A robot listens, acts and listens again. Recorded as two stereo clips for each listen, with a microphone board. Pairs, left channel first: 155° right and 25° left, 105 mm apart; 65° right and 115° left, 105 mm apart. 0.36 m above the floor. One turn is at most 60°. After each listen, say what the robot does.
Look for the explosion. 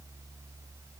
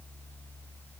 Keep listening.
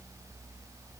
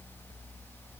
Keep listening.
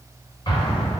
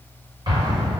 Turn 60° left.
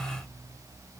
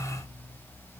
Turn 60° left.
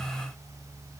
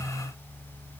Turn 40° left.
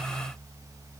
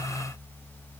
I heard an explosion from this way, but can't make it out now.